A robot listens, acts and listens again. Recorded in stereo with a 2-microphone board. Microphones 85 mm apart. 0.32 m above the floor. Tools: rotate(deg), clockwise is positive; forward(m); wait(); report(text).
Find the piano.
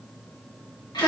wait()
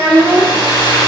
wait()
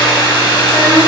report("I can't make out a piano to turn to.")